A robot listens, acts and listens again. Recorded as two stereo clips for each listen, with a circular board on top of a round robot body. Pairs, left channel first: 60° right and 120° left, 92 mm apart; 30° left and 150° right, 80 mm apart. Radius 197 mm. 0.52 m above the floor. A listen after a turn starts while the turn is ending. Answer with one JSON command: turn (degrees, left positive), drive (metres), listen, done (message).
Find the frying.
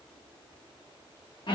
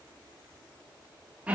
{"listen": true}
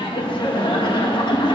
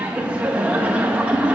{"listen": true}
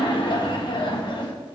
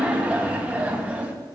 {"done": "I can't make out frying, only laughter."}